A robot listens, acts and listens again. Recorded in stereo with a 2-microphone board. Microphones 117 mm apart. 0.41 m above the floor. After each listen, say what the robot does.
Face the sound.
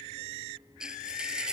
Turn 30° right.
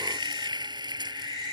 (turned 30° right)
Turn 140° right.
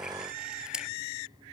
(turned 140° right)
Turn 10° right.
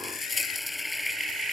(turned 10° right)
Facing the frying.